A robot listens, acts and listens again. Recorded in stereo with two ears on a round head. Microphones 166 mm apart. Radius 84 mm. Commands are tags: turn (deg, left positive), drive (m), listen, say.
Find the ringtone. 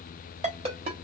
<turn deg="-30"/>
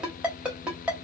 <say>Found it: a ringtone, straight ahead, 1 to 2 m away.</say>